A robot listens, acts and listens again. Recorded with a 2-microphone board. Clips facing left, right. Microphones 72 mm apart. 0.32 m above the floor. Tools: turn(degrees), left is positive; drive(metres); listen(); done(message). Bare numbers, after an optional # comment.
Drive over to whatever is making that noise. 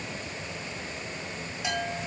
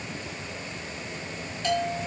turn(30)
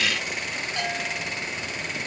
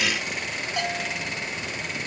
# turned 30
# So it is at 15° right.
turn(-15)
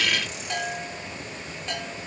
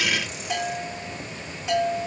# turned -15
drive(1.0)
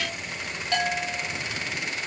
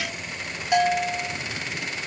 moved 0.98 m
# The bell is now 15° right.
turn(-15)
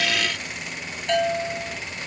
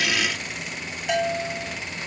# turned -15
# The bell is now 10° right.
turn(-10)
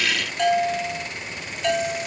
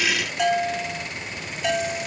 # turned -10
drive(1.0)
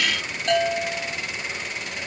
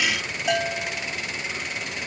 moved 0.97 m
# The bell is now 10° right.
turn(-10)
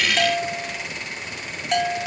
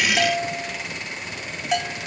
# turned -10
drive(1.0)
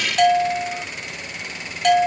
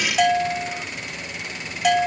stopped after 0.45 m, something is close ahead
done("I am next to the bell.")